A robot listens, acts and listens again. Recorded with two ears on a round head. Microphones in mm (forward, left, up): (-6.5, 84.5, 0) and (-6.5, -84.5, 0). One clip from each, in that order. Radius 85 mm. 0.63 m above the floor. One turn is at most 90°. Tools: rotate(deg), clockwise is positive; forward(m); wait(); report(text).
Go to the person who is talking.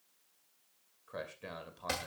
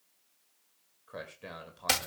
rotate(-30)
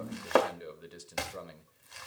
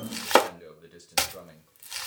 rotate(-90)
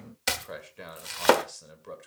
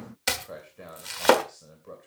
rotate(-60)
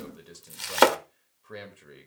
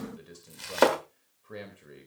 rotate(-25)
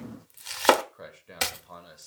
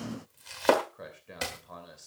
rotate(-15)
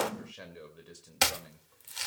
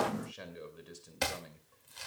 forward(1.0)
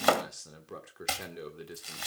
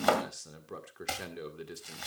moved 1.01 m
forward(1.0)
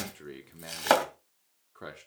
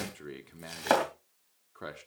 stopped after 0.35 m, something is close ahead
report("Arrived at the man speaking, straight ahead.")